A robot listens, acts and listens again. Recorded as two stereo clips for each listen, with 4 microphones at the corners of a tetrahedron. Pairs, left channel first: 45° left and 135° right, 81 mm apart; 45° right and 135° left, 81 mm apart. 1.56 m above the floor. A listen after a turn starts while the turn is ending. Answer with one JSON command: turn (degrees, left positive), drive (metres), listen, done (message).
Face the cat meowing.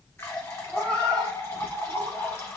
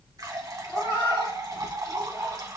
{"turn": -30}
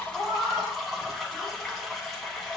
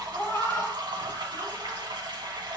{"done": "Facing the cat meowing, 1 to 2 m away."}